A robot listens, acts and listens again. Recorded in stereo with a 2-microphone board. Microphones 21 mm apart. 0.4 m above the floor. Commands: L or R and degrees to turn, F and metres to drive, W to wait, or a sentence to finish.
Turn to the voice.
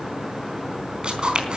W
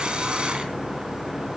W
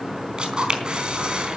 I can't make out anyone speaking to turn to.